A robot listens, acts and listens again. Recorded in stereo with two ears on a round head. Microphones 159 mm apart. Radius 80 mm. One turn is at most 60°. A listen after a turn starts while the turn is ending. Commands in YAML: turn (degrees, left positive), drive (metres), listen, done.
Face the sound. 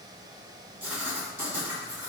turn: -30
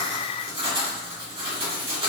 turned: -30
turn: -60
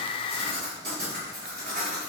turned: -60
turn: -60
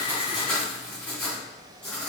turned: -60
turn: 10
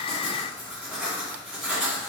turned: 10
done: "Facing the writing, 1 to 2 m away."